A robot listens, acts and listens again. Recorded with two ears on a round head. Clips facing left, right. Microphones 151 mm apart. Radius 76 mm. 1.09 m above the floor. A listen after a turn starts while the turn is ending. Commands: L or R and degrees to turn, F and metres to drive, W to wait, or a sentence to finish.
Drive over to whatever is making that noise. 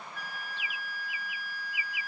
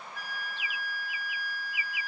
R35
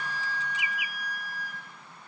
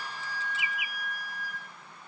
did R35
F1.0
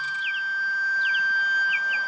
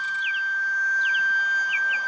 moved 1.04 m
F1.0
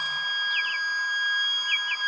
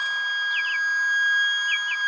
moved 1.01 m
F1.0
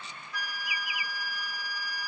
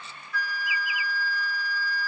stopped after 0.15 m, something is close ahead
L15
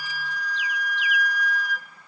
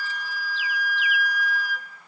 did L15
I am next to the flute.